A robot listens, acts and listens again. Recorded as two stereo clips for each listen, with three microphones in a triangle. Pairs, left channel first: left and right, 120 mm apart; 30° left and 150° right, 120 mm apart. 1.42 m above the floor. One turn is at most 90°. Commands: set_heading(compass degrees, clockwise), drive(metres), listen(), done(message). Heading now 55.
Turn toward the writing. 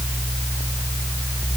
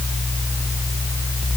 listen()
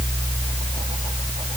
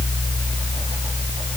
listen()
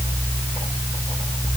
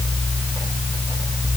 done("I can't make out writing.")